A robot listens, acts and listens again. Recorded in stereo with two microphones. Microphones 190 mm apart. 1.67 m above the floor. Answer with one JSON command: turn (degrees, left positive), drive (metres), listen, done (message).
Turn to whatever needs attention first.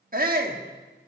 {"turn": -50}
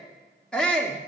{"done": "Found it: a shout, straight ahead."}